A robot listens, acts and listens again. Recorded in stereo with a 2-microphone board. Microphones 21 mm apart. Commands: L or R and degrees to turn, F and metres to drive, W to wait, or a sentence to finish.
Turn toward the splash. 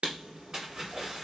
R45
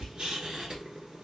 W
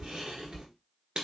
I heard a splash, but can't make it out now. It was about straight ahead or 90° right.